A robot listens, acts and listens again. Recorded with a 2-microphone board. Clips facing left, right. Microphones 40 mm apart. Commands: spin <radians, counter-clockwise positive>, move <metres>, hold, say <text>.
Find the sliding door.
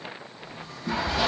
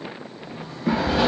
spin -0.52
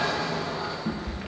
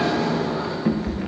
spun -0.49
spin -2.09
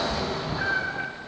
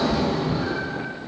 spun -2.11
say Found it: a sliding door, straight ahead.